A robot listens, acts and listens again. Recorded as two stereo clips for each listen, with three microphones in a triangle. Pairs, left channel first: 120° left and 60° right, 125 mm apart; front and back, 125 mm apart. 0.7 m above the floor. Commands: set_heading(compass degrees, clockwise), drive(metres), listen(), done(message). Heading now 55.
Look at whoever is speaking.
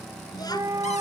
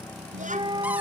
set_heading(235)
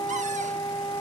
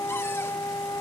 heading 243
listen()
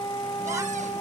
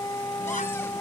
listen()
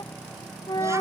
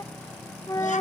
done("I heard a child speaking from this way, but can't make it out now.")